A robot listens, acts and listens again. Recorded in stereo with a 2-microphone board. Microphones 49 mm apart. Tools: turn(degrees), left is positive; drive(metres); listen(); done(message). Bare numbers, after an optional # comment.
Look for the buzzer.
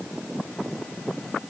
listen()
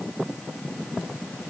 listen()
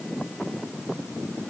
done("I can't make out a buzzer.")